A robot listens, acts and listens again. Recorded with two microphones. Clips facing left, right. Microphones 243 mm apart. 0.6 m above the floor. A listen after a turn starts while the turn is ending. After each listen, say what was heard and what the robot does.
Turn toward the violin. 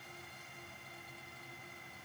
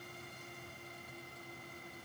Keep listening.
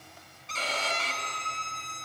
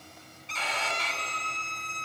The violin: about 45° left or 135° left. Turn 45° left.
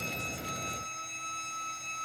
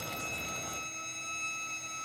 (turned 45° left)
Found it: a violin, straight ahead.